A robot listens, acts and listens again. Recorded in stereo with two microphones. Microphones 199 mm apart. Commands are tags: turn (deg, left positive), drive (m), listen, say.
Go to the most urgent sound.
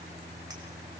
<listen/>
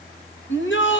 <turn deg="90"/>
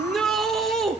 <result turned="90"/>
<drive m="1.0"/>
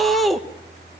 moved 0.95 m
<drive m="1.0"/>
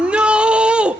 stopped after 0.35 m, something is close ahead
<say>Arrived at the shout, straight ahead.</say>